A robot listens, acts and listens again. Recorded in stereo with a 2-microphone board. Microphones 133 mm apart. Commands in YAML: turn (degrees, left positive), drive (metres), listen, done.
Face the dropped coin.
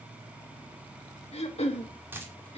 turn: -15
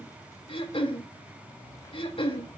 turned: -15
listen: true
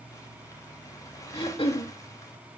done: "I heard a dropped coin, but can't make it out now. It was about straight ahead or 150° right."